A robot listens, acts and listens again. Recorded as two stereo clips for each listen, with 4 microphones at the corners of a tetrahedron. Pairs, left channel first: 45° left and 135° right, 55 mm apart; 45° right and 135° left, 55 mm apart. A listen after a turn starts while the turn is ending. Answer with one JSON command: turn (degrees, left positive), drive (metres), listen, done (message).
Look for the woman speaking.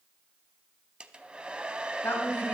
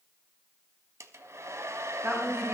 {"turn": 95}
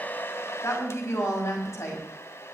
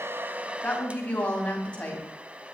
{"turn": 20}
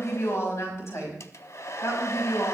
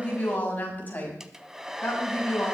{"turn": 15}
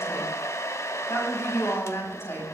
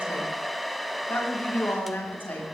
{"done": "Facing the woman speaking, over 4 m away."}